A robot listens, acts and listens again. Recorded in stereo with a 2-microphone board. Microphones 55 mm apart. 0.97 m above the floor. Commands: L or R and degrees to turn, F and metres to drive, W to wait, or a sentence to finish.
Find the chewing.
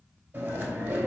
R30
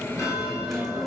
Found it: chewing, straight ahead, 2 to 4 m away.